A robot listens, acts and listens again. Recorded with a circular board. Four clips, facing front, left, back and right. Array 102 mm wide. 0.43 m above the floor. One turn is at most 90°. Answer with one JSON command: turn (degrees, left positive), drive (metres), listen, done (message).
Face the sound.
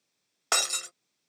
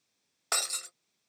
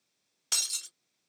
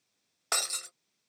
{"done": "Found it: breaking glass, straight ahead."}